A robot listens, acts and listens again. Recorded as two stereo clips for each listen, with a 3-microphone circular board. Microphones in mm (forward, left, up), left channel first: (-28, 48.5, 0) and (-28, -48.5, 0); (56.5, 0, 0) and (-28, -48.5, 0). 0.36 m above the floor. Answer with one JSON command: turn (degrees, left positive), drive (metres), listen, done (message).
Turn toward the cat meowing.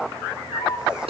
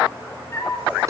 {"turn": 95}
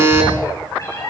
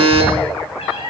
{"turn": 35}
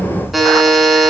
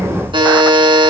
{"listen": true}
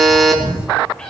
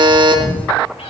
{"turn": 10}
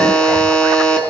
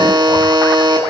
{"listen": true}
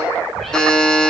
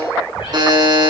{"done": "Facing the cat meowing, over 4 m away."}